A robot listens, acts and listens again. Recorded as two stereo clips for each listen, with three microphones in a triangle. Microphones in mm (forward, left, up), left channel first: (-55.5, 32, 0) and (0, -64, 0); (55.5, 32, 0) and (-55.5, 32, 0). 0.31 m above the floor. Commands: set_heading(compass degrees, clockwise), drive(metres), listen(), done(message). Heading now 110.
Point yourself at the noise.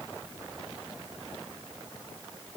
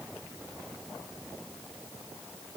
listen()
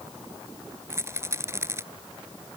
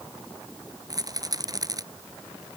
set_heading(235)
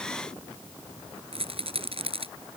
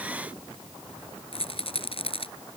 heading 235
set_heading(265)
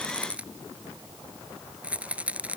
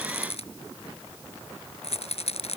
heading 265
set_heading(245)
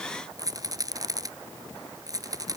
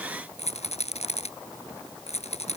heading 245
done("Found it: a rattle, straight ahead.")